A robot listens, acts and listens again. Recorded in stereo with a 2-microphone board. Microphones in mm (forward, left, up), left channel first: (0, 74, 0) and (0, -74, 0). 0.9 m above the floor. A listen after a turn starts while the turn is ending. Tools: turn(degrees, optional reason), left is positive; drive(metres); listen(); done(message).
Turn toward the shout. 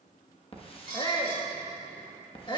turn(degrees=30, reason="The shout: about 30° left or 150° left.")
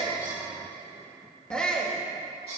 done("Facing the shout.")